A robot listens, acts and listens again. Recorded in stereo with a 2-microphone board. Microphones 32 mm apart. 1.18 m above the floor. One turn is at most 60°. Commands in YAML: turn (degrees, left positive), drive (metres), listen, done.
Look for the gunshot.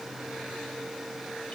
listen: true
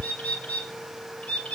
listen: true
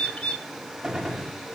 turn: -25
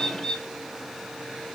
listen: true
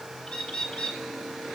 done: "I heard a gunshot, but can't make it out now. It was about straight ahead or 130° right."